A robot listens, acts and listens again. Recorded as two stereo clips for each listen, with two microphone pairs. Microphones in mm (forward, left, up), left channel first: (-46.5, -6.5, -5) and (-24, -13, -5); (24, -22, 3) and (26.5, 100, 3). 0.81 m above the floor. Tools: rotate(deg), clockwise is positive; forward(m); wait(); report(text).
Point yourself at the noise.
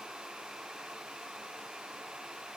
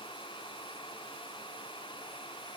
wait()
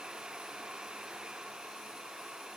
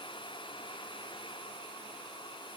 wait()
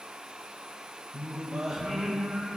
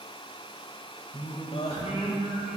rotate(65)
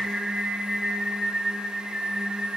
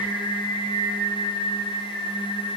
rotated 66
report("Found it: singing, straight ahead.")